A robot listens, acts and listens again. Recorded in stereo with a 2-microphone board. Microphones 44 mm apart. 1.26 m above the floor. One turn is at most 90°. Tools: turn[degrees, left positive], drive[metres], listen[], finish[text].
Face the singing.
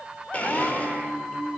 Thought: The singing: about 20° right or 160° right.
Action: turn[-20]
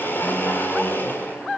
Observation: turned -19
Action: listen[]
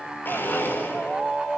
Action: finish[Facing the singing.]